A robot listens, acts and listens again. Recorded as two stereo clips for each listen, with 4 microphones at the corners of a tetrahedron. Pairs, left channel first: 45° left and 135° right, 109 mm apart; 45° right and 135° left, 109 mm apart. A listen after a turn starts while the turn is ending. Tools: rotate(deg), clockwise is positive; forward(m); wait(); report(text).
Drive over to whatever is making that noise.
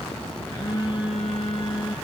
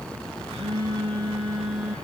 rotate(-100)
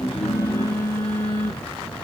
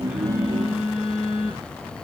rotate(10)
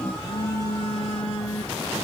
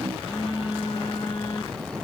forward(1.0)
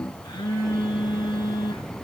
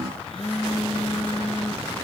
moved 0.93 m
forward(1.0)
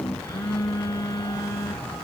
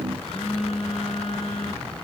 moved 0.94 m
rotate(15)
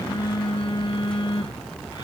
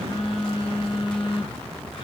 forward(1.0)
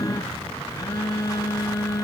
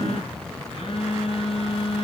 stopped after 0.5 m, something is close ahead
rotate(15)
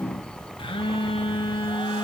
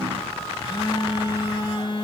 report("Arrived at the phone buzzing, straight ahead.")